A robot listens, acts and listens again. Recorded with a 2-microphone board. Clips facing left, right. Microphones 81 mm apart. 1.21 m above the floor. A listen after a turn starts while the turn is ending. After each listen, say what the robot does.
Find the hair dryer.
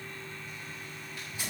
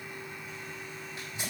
Keep listening.
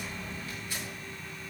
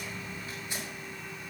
Keep listening.
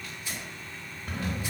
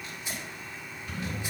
I can't make out a hair dryer, only a sliding door and tearing paper.